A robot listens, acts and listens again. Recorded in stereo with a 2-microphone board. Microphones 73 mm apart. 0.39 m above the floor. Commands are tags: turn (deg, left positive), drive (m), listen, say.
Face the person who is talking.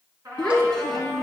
<turn deg="30"/>
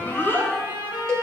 <turn deg="155"/>
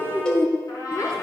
<turn deg="45"/>
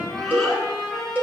<listen/>
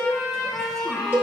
<listen/>
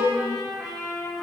<say>I heard a child speaking from this way, but can't make it out now.</say>